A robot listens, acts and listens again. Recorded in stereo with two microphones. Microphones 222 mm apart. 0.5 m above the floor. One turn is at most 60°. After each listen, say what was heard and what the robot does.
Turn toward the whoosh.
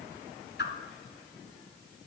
The whoosh: about 55° left or 125° left. Turn 55° left.
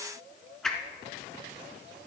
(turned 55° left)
Found it: a whoosh, straight ahead.